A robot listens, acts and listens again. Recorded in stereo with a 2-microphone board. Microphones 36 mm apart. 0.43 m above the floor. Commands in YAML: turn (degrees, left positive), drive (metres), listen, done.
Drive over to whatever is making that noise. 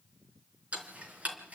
turn: -45
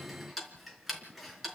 drive: 1.0
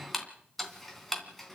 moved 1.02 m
drive: 1.0
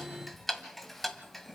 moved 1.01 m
drive: 1.0
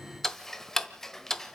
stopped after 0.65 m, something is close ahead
turn: 10
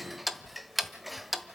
done: "I am next to the ticking."